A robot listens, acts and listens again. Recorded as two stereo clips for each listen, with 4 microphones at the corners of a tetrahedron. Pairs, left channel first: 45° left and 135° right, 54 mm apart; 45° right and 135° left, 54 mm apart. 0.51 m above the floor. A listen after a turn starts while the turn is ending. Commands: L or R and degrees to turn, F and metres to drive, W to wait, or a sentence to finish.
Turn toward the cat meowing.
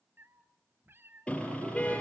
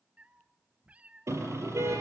R165
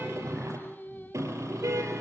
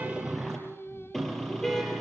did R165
W
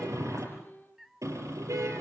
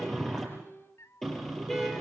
R50
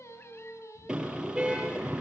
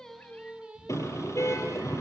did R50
L20
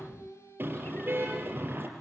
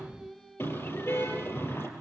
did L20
W
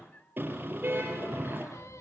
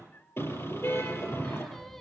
Facing the cat meowing.